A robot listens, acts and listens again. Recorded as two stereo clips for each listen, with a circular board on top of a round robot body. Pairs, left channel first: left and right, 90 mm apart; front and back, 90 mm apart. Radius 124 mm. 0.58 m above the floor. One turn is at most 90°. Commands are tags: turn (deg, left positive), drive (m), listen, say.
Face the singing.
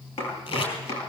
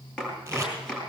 <listen/>
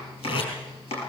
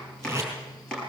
<listen/>
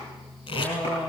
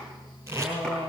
<turn deg="40"/>
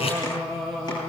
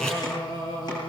<say>Facing the singing.</say>